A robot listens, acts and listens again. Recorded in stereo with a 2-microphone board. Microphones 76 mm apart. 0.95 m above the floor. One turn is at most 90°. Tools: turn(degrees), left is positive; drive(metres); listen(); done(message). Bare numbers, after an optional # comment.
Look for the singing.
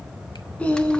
# The singing: about 15° left or 165° left.
turn(15)
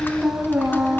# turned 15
turn(-30)
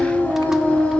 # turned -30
# So it is at 15° left.
turn(15)
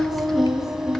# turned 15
done("Facing the singing.")